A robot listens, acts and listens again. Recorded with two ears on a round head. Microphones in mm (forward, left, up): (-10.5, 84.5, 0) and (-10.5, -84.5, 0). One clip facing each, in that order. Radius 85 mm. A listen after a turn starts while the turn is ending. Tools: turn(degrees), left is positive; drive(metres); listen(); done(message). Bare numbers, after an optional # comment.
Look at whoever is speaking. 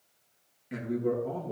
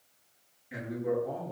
# The man speaking: about 75° left or 105° left.
turn(75)
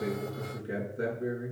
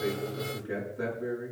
# So it is at 30° left.
turn(30)
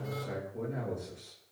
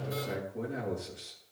done("Found it: a man speaking, straight ahead, over 4 m away.")